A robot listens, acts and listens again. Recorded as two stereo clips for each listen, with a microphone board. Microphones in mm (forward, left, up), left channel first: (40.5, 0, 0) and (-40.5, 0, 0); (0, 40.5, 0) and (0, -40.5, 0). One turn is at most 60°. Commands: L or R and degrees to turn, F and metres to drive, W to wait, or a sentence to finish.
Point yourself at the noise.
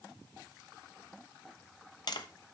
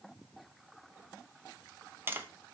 R30
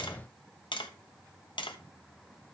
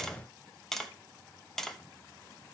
Found it: tapping, straight ahead.